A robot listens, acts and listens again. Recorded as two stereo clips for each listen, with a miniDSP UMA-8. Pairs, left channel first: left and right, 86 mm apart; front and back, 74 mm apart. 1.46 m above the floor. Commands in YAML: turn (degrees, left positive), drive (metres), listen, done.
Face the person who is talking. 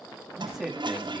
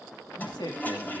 done: "Facing the man speaking."